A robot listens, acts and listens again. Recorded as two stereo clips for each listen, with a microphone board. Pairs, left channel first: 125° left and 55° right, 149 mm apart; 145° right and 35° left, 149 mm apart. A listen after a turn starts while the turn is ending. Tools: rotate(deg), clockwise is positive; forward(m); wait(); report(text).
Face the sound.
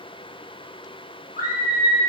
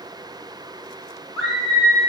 rotate(-100)
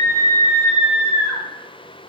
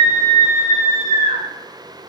rotate(-15)
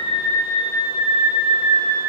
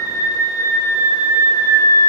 rotate(-10)
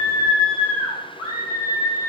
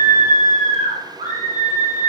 report("Facing the scream, 2 to 4 m away.")